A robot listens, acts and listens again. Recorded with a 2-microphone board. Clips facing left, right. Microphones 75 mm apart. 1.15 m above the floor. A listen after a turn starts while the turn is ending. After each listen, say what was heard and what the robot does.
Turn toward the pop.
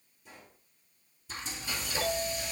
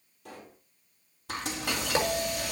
The pop: about 70° right or 110° right. Turn 70° right.
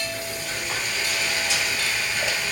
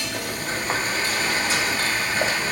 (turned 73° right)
Keep listening.
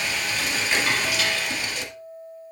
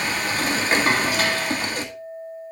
I heard a pop, but can't make it out now. It was about 5° left or 35° right.